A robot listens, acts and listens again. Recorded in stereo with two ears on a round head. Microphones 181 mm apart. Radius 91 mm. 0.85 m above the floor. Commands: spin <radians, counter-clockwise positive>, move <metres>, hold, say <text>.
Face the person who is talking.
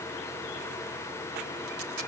hold
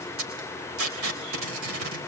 hold
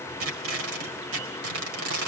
say I can't make out anyone speaking to turn to.